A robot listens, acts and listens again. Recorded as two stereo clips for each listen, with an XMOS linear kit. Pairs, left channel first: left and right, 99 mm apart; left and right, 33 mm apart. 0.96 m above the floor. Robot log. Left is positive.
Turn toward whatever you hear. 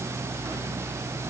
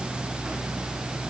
cmd idle
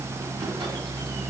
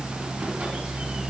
cmd idle
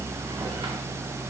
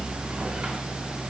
end: I can't make out anything to turn to.